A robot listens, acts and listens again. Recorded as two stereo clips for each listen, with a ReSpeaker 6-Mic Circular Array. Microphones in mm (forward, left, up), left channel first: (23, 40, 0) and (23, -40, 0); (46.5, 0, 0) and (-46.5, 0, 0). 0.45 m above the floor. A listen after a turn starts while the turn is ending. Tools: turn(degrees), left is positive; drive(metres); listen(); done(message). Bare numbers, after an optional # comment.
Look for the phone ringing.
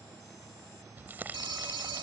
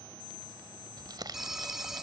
# The phone ringing: 95° right.
turn(-95)
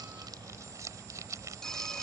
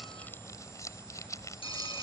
# The phone ringing is now 10° left.
turn(10)
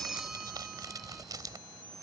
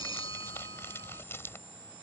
done("Facing the phone ringing.")